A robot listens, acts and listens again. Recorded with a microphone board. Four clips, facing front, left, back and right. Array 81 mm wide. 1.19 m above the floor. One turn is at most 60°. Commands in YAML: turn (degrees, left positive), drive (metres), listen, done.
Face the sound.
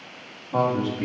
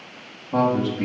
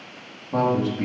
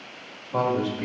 turn: 60
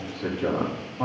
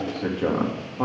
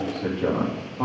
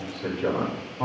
turn: 60
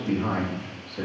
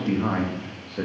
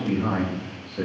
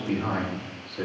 turn: 60
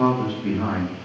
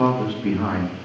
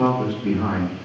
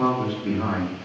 turn: 60
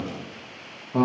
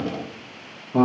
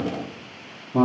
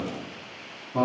turn: 50
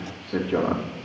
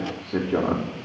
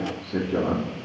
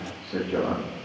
turn: -15
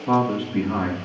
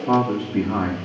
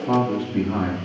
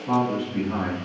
done: "Found it: a man speaking, straight ahead, 2 to 4 m away."